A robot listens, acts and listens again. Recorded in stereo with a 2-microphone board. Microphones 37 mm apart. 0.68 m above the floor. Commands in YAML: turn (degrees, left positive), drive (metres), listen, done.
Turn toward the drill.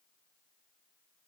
listen: true
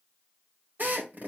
turn: -55
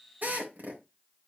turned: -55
turn: -65
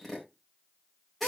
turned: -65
done: "Found it: a drill, straight ahead, 2 to 4 m away."